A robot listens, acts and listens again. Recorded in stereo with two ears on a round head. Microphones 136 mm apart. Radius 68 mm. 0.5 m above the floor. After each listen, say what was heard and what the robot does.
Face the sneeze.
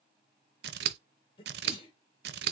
The sneeze: about 35° left or 145° left. Turn 35° left.
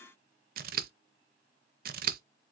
Keep listening.
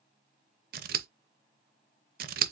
I heard a sneeze, but can't make it out now. It was about straight ahead or 110° left.